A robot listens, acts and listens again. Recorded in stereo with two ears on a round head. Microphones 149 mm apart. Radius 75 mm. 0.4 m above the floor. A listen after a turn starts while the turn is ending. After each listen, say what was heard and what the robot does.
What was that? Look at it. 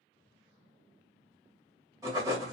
The writing: about 20° right or 160° right. Turn 20° right.
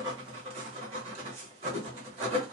So it is at 135° right. Turn 135° right.
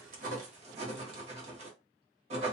The writing is now 45° right. Turn 45° right.
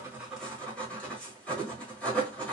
The writing is now 10° left. Turn 10° left.
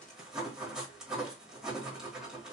Facing the writing.